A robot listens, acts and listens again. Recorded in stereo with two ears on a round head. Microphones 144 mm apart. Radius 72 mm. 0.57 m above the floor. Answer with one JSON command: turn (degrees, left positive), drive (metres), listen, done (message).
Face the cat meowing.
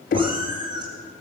{"turn": -25}
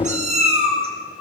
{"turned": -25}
{"turn": -40}
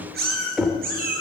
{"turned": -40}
{"turn": -125}
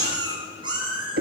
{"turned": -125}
{"turn": -35}
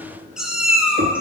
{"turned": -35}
{"turn": -10}
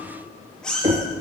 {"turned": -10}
{"done": "Found it: a cat meowing, straight ahead."}